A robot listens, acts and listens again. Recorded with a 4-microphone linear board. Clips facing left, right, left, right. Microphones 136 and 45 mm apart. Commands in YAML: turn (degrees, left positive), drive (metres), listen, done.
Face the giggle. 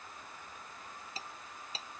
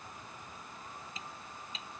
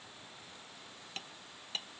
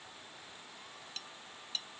listen: true
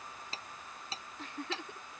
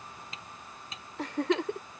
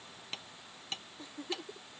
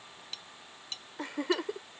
turn: -90
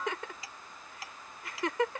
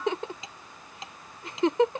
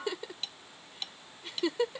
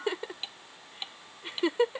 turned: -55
turn: -25
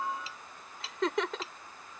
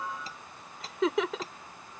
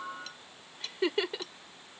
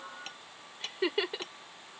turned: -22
done: "Facing the giggle."